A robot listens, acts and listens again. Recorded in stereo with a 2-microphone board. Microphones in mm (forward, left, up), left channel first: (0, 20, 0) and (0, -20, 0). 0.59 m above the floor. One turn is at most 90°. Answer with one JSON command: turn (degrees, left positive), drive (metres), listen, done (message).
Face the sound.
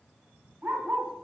{"turn": -65}
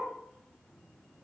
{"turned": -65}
{"turn": 10}
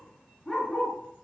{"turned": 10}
{"turn": 15}
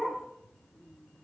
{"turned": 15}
{"done": "Facing the dog barking."}